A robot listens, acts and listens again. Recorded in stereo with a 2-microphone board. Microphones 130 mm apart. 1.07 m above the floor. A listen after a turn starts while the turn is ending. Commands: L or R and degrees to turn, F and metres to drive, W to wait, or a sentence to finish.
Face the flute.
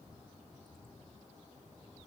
W
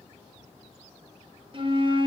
R40
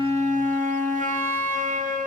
R100
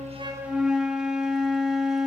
Found it: a flute, straight ahead.